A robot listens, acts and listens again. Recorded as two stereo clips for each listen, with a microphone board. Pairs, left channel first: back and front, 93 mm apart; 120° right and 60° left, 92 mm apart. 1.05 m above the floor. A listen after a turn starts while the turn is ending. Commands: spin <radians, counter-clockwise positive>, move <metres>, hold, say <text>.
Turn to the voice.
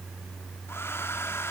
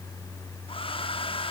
hold
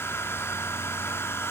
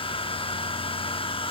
hold
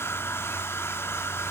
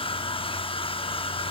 say I can't make out anyone speaking, only a hair dryer.